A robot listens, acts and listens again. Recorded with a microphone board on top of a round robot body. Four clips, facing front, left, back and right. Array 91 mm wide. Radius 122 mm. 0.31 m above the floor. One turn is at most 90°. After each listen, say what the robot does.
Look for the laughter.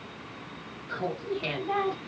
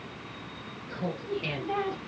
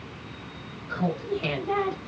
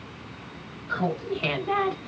Turn 90° right.
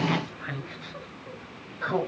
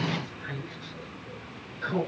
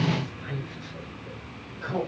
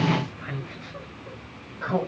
Turn 50° right.
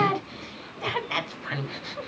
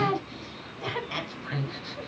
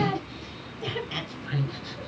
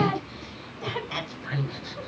Turn 10° right.
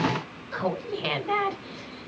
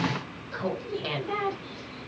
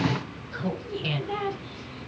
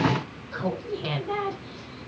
Found it: laughter, straight ahead, over 4 m away.